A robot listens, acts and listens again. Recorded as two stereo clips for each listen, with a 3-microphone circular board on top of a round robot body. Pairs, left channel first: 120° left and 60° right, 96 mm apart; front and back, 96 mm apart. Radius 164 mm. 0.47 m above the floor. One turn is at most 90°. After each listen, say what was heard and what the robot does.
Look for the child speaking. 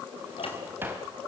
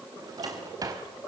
Keep listening.
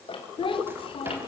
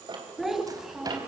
The child speaking: 95° left. Turn 90° left.
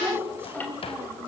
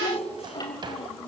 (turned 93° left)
The child speaking is now 10° left. Turn 10° left.
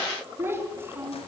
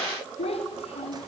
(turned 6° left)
Found it: a child speaking, straight ahead, 2 to 4 m away.